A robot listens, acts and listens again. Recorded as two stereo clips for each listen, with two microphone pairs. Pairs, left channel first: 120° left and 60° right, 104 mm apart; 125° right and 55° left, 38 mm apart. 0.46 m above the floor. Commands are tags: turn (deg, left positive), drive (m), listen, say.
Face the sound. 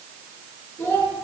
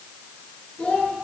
<turn deg="-175"/>
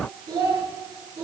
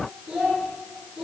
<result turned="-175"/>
<turn deg="-10"/>
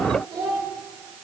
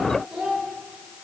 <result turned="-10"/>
<say>Found it: a child speaking, straight ahead, over 4 m away.</say>